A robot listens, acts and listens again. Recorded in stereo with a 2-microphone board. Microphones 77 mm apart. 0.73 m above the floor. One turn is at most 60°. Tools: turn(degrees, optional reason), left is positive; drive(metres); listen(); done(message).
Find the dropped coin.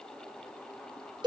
listen()
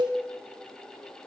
listen()
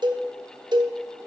done("I can't make out a dropped coin, only a cowbell.")